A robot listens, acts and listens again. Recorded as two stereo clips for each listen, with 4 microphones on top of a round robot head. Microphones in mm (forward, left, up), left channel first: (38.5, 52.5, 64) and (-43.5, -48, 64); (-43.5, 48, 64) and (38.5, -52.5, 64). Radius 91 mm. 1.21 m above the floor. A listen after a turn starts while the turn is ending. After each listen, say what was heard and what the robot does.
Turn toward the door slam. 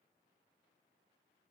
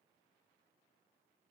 Keep listening.
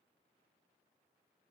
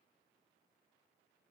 Keep listening.
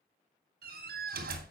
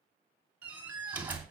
The door slam: 130° right. Turn 130° right.
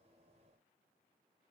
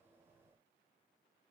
I heard a door slam from this way, but can't make it out now.